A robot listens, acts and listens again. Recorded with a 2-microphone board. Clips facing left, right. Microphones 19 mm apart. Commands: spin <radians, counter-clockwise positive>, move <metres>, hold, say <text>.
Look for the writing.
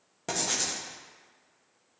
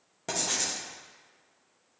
spin 0.52
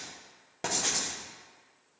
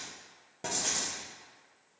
spin 2.62
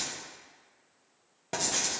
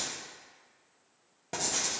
spin 0.26
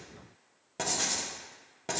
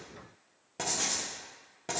say Found it: writing, straight ahead.